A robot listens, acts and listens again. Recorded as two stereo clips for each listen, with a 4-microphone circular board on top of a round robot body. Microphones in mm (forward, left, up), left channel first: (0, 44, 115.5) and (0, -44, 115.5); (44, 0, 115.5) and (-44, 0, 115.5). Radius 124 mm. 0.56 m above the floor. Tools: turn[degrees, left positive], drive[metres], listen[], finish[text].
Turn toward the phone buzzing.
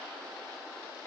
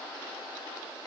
Action: listen[]
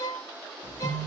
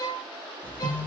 Thought: The phone buzzing: 70° right.
Action: turn[-70]
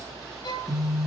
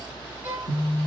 Action: finish[Found it: a phone buzzing, straight ahead.]